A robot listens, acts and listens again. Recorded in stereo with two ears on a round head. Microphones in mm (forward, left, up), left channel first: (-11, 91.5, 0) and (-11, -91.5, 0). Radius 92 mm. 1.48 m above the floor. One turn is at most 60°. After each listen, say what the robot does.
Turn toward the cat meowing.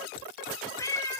Turn 15° left.
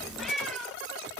Found it: a cat meowing, straight ahead.